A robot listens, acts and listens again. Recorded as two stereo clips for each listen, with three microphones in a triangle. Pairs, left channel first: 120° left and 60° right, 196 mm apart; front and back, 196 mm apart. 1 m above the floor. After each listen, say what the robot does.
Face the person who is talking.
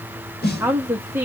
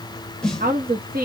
Turn 140° right.
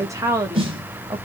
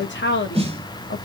Turn 15° left.
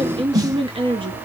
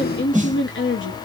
Facing the woman speaking, under 1 m away.